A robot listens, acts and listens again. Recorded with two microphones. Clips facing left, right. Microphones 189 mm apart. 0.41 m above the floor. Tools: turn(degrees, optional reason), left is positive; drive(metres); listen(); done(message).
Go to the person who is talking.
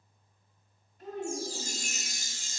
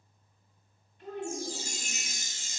turn(degrees=45, reason="The child speaking: about 45° left or 135° left.")
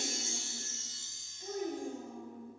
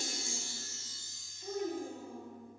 turn(degrees=85, reason="So it is at 85° left.")
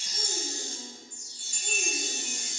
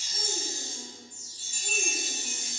listen()
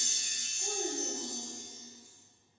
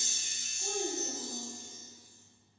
drive(metres=1.0)
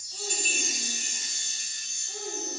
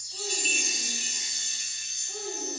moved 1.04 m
drive(metres=1.0)
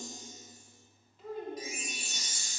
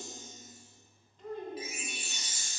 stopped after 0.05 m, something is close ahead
done("I am next to the child speaking.")